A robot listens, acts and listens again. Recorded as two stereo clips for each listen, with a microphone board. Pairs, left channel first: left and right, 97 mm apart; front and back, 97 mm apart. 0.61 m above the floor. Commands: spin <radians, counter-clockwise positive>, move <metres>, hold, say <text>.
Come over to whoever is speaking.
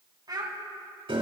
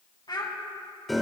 spin -0.70
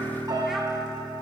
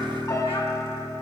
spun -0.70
hold
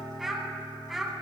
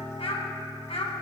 move 1.0
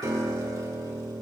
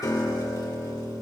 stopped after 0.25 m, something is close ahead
hold
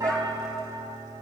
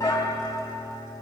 hold
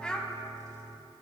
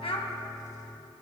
spin 0.17
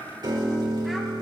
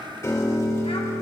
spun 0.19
hold
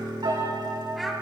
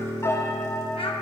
hold
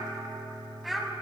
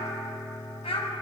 say Something is in my way. I am facing the child speaking but have not reached it.